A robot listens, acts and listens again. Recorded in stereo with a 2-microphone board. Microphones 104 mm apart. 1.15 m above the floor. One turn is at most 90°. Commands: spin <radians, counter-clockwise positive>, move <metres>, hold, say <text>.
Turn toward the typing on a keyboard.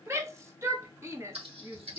spin -1.13
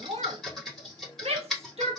say Found it: typing on a keyboard, straight ahead, 2 to 4 m away.